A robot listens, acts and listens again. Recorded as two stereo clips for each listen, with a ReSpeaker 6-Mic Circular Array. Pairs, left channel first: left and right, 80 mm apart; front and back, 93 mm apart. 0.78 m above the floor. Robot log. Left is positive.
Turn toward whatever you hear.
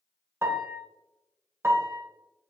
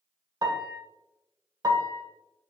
note: The piano: 140° right.
cmd yaw -140
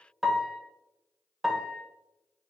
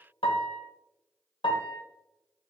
end: Facing the piano, under 1 m away.